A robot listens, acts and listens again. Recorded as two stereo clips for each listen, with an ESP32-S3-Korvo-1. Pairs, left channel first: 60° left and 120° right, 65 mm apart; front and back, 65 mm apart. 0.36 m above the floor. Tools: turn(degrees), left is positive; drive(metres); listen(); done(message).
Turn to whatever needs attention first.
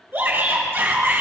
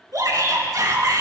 turn(degrees=-170)
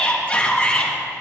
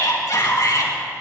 done("Facing the shout.")